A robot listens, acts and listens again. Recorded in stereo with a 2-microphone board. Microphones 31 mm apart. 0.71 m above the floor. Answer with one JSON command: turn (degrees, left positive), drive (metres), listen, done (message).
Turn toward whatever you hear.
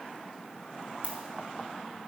{"turn": -55}
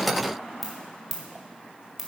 {"done": "Facing the ringtone, 1 to 2 m away."}